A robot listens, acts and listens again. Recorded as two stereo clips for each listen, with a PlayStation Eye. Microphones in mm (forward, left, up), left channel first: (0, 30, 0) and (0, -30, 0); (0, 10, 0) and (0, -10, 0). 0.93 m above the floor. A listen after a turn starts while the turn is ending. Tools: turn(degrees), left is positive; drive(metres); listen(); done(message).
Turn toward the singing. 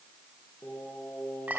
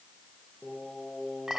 turn(degrees=35)
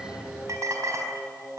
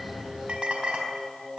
turn(degrees=100)
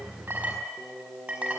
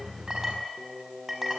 done("Facing the singing, over 4 m away.")